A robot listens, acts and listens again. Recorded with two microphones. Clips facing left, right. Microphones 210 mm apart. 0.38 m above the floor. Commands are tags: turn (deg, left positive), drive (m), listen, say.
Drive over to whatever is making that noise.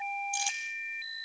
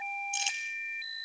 <turn deg="-25"/>
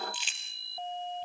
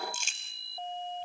<turn deg="-135"/>
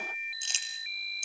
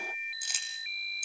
<turn deg="25"/>
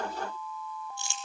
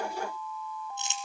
<turn deg="-20"/>
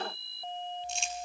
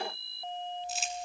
<drive m="1.0"/>
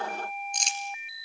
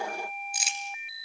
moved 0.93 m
<drive m="1.0"/>
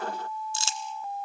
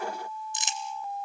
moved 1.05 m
<turn deg="-20"/>
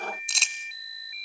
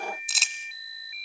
<drive m="1.0"/>
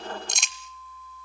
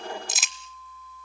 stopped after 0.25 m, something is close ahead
<say>Arrived at the crumpling, straight ahead.</say>